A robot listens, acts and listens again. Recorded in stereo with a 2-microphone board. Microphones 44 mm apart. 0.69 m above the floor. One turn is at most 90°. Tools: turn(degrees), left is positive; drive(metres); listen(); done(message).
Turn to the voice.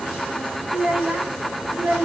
turn(degrees=-35)
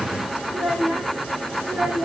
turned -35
turn(degrees=-20)
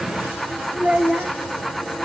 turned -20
turn(degrees=-15)
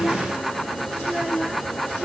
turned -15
turn(degrees=-10)
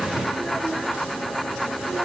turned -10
listen()
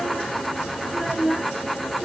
done("Facing the child speaking.")